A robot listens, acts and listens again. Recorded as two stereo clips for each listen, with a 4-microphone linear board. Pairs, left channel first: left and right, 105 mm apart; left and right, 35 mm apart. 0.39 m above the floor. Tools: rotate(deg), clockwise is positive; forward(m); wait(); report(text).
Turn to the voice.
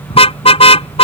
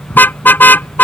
wait()
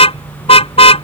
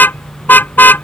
wait()
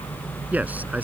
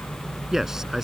rotate(30)
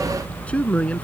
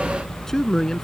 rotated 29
rotate(-15)
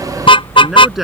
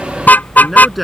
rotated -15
report("Facing the man speaking.")